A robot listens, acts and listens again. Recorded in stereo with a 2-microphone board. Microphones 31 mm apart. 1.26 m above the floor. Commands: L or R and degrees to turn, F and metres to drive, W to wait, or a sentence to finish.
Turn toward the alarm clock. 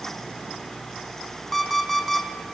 L30
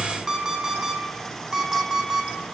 R30
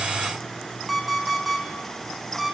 Found it: an alarm clock, straight ahead, 2 to 4 m away.